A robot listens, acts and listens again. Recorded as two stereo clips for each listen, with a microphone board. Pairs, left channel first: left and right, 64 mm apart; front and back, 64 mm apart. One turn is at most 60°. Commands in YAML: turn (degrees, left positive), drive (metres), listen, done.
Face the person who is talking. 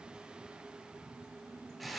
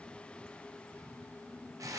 listen: true
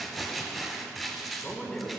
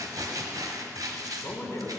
turn: 10
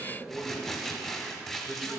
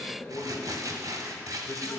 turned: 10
done: "Found it: a man speaking, straight ahead, 1 to 2 m away."